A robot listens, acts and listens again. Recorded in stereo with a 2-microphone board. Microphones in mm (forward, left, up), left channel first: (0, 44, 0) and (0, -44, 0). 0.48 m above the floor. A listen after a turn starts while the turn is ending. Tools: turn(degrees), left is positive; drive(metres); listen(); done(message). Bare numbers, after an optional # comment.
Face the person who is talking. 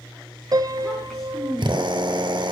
turn(30)
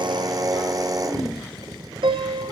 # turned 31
listen()
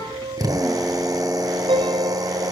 listen()
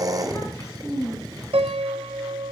# So it is at 145° left.
turn(145)
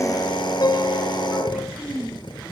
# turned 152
# The child speaking is now 10° right.
turn(-10)
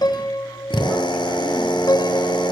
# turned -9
listen()
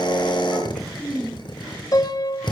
done("Found it: a child speaking, straight ahead.")